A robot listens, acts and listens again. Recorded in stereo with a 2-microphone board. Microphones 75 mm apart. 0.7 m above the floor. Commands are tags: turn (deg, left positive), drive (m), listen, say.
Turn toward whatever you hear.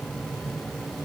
<listen/>
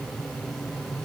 <listen/>
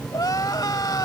<turn deg="60"/>
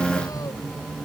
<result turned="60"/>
<listen/>
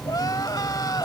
<turn deg="60"/>
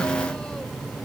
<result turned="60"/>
<listen/>
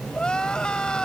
<turn deg="10"/>
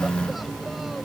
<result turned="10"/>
<listen/>
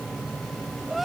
<say>Found it: crying, straight ahead.</say>